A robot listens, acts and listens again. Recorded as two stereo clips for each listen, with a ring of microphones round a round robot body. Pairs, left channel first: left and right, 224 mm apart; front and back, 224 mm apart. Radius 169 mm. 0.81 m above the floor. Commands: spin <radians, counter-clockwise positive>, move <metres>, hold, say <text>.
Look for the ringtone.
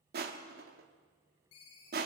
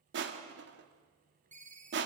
spin 2.18
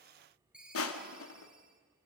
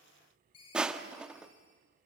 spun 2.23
say Facing the ringtone.